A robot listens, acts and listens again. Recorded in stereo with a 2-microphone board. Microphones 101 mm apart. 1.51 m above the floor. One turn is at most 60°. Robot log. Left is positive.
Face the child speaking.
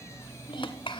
note: The child speaking: about 65° left or 115° left.
cmd yaw +60
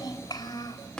note: So it is at 45° left.
cmd yaw +45
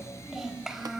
end: Found it: a child speaking, straight ahead, over 4 m away.